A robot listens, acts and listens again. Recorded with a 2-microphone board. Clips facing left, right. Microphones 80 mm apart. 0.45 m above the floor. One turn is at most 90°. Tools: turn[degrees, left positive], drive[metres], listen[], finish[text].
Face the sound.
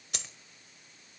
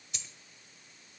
Thought: The dropped coin: about 70° left or 110° left.
Action: turn[70]
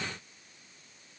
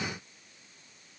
Action: listen[]
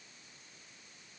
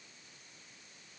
Action: finish[I heard a dropped coin, but can't make it out now. It was about straight ahead or 40° left.]